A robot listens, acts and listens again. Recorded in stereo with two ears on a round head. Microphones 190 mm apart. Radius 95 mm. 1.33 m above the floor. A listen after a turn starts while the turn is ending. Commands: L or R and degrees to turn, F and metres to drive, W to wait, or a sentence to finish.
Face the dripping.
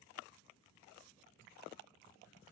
W
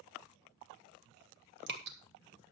R55
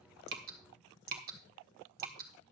R55
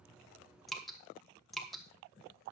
Facing the dripping, 1 to 2 m away.